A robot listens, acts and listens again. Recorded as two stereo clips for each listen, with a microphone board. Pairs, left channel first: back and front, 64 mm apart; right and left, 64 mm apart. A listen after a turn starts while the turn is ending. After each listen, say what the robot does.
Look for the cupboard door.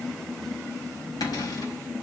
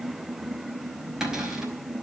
Turn 175° left.
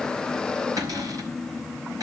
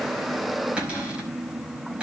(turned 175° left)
Turn 20° left.
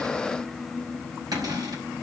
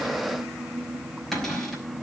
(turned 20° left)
Facing the cupboard door, over 4 m away.